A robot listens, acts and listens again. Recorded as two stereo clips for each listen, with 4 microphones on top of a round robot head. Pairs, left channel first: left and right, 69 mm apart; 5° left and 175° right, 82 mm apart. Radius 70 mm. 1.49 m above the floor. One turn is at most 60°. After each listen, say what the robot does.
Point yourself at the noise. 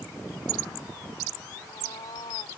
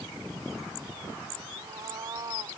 Turn 60° left.
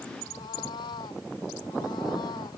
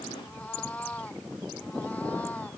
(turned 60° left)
Turn 60° left.
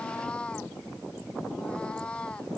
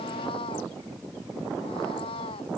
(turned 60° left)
Turn 15° left.
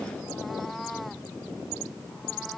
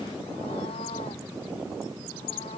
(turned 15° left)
Keep listening.
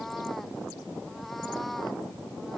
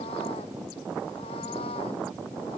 Keep listening.
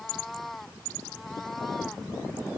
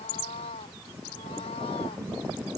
Facing the cat meowing.